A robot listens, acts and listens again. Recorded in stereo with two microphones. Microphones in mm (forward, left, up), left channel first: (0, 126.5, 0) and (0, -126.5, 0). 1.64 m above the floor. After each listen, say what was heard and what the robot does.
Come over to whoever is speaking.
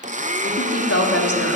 The woman speaking: about 65° left or 115° left. Turn 65° left.
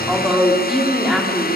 Drive 1.0 m forward.
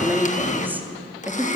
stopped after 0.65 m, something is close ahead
The woman speaking is now 10° right. Turn 10° right.
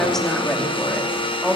Something is in my way. I am facing the woman speaking but have not reached it.